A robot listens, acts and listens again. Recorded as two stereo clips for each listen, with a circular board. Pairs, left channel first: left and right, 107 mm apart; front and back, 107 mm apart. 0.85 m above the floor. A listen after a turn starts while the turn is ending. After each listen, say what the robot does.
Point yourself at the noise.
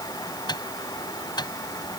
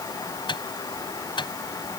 Turn 45° left.
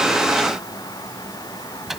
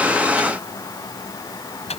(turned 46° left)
Found it: a microwave, straight ahead.